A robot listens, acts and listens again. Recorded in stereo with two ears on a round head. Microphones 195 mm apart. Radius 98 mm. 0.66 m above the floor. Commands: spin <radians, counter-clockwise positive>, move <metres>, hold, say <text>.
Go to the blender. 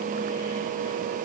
hold
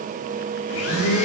spin 1.31
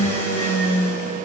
spin 0.17
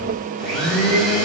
move 1.0
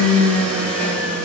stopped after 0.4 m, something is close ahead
say Blocked. The blender is further on, straight ahead.